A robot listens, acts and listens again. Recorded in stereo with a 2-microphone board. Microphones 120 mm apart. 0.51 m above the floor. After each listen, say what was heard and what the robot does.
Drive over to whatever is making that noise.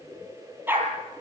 The dog barking: about 15° right or 165° right. Turn 15° right.
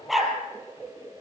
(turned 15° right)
Drive 1.0 m forward.
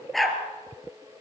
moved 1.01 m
Drive 1.0 m forward.
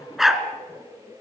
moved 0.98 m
Drive 1.0 m forward.
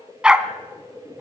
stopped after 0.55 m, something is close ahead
The dog barking is now 10° right. Turn 10° right.
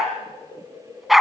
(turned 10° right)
I am next to the dog barking.